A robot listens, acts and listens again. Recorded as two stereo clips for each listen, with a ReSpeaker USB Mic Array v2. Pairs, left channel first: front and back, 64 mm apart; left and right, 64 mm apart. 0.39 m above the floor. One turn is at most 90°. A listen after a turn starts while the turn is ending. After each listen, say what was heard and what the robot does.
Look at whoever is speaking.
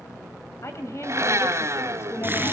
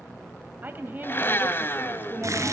The woman speaking: 30° right. Turn 30° right.
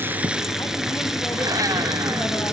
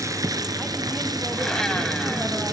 Keep listening.
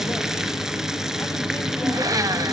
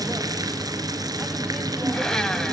Keep listening.
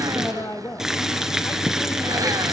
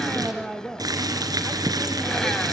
Found it: a woman speaking, straight ahead, 1 to 2 m away.